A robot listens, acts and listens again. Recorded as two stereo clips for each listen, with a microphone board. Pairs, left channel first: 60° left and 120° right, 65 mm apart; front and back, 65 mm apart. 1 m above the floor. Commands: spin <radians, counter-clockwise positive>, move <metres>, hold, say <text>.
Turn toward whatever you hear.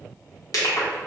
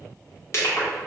spin 0.79
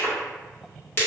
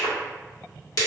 spin 0.17
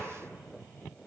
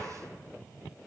hold
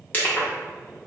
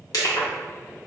say Facing the crushing, 1 to 2 m away.